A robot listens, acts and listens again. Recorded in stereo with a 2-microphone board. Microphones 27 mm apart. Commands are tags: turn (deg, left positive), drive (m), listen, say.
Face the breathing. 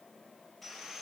<listen/>
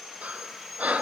<turn deg="-70"/>
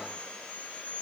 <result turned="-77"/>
<listen/>
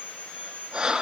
<turn deg="-35"/>
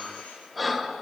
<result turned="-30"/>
<say>Found it: breathing, straight ahead, 1 to 2 m away.</say>